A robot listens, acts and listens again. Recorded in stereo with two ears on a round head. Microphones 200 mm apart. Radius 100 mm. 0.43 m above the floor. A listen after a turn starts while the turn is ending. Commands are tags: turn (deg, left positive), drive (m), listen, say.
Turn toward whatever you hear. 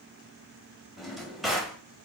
<turn deg="30"/>
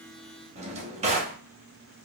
<turn deg="-30"/>
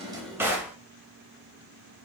<turn deg="-10"/>
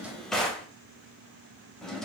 <say>Facing the drawer.</say>